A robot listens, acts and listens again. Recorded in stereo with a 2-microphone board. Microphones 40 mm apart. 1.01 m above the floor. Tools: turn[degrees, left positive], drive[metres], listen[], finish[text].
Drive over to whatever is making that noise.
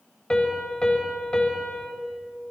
Thought: The piano: about 25° left or 155° left.
Action: turn[25]
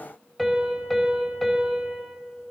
Action: drive[1.0]
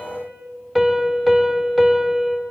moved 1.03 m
Action: drive[1.0]
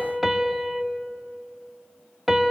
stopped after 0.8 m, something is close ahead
Action: finish[Arrived at the piano, straight ahead.]